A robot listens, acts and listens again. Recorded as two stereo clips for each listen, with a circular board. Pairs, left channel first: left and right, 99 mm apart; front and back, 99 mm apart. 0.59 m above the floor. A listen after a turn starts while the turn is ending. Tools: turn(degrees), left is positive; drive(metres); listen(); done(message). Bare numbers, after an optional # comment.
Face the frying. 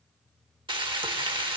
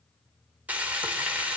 # The frying: 110° right.
turn(-110)
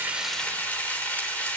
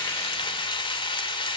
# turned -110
# The frying is now 20° left.
turn(20)
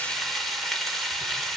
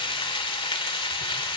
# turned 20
done("Found it: frying, straight ahead.")